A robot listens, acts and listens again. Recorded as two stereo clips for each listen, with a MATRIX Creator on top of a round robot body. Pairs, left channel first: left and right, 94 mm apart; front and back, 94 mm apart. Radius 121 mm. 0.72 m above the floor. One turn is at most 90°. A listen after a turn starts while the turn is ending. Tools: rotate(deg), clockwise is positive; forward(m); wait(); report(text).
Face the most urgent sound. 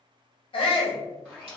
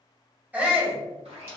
rotate(-90)
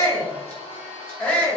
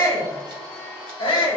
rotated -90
rotate(-20)
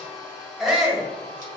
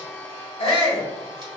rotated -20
report("Found it: a shout, straight ahead.")